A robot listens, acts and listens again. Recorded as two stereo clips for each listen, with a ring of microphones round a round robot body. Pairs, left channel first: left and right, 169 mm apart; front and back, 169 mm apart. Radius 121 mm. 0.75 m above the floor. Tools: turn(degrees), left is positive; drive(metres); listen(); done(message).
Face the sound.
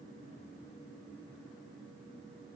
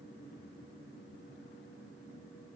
listen()
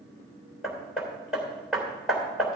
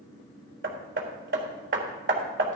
turn(degrees=180)
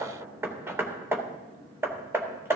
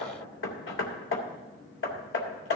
turn(degrees=-15)
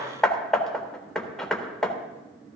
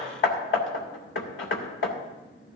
done("Found it: hammering, straight ahead.")